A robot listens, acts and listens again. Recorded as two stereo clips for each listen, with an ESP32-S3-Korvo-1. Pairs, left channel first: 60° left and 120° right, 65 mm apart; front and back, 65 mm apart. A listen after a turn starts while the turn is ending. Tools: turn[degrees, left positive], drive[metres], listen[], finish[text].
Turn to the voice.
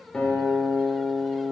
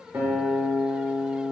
Action: listen[]
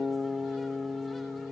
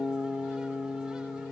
Action: listen[]
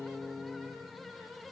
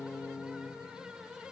Action: finish[I can't make out anyone speaking to turn to.]